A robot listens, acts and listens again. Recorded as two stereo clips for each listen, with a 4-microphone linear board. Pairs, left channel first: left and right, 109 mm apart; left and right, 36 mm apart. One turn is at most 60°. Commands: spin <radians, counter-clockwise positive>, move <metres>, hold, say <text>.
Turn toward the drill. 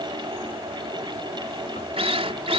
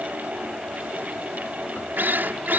spin -1.05
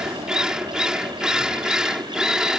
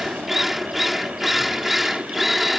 say Found it: a drill, straight ahead.